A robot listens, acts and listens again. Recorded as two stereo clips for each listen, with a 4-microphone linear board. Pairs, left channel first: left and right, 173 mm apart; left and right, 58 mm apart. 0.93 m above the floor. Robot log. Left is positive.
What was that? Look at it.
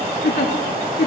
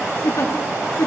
cmd yaw +90
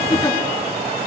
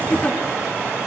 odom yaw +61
note: So it is at 30° left.
cmd yaw +30
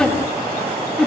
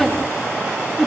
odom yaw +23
end: Facing the giggle, 2 to 4 m away.